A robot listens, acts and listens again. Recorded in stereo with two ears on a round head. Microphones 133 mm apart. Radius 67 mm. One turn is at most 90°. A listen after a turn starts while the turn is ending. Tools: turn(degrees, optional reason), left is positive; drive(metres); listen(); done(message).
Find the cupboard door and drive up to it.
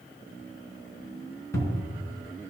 turn(degrees=20, reason="The cupboard door: about 20° left or 160° left.")
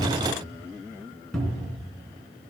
drive(metres=1.0)
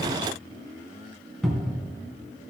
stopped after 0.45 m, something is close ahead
done("Blocked. The cupboard door is further on, straight ahead.")